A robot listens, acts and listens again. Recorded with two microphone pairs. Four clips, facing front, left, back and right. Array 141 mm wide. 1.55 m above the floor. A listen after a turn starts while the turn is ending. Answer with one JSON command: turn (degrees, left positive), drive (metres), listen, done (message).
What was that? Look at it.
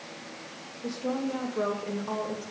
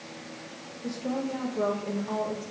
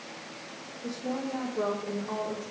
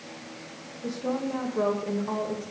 {"turn": -35}
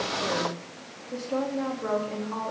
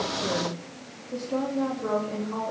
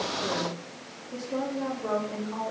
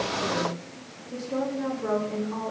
{"done": "Facing the woman speaking."}